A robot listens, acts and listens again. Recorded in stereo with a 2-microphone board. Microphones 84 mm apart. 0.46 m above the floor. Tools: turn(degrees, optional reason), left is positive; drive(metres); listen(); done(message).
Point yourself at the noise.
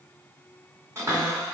turn(degrees=-35, reason="The cupboard door: about 35° right or 145° right.")
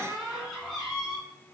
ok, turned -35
done("Facing the cupboard door, 1 to 2 m away.")